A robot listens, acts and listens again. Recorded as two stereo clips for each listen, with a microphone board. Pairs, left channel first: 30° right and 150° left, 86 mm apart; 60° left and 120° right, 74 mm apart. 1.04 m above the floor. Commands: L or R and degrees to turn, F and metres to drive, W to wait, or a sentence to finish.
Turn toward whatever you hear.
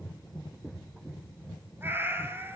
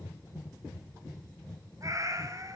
R150
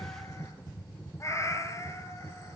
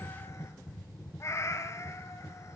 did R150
L20
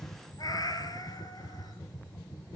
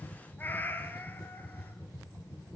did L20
Facing the cat meowing.